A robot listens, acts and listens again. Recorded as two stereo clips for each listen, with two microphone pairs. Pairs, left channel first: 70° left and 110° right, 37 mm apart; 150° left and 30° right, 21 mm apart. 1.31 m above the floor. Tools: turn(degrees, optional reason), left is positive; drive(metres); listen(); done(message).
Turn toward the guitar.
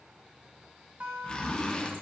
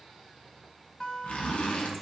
turn(degrees=-150, reason="The guitar: 150° right.")
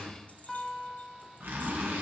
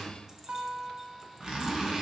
turn(degrees=-15, reason="The guitar is now 15° right.")
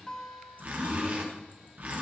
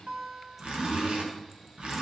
done("Facing the guitar, 1 to 2 m away.")